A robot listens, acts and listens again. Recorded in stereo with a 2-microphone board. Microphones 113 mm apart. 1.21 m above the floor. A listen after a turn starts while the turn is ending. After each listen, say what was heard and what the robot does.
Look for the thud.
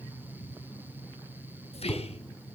The thud: about 30° left or 150° left. Turn 30° left.
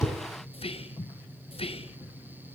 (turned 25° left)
Keep listening.
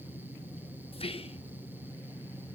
I heard a thud, but can't make it out now. It was about 5° left or 125° left.